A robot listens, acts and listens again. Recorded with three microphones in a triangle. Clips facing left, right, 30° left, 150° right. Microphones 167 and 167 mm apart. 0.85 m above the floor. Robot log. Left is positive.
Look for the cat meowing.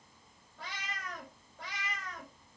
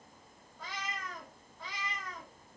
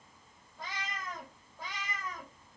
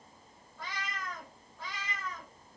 note: The cat meowing: 105° left.
cmd yaw +105
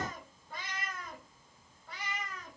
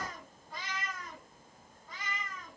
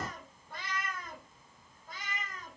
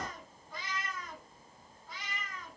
note: The cat meowing is now 75° left.
cmd yaw +75
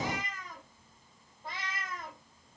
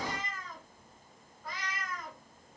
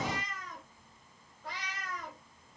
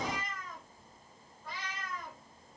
note: The cat meowing is now 25° left.
cmd yaw +25
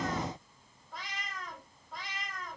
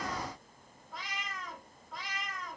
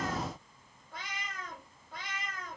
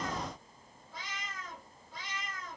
end: Found it: a cat meowing, straight ahead.